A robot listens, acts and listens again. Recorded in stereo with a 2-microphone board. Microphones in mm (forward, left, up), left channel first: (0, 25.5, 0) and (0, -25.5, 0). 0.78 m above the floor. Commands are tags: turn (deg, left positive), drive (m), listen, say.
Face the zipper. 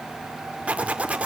<turn deg="-25"/>
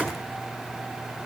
<listen/>
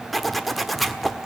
<say>Found it: a zipper, straight ahead.</say>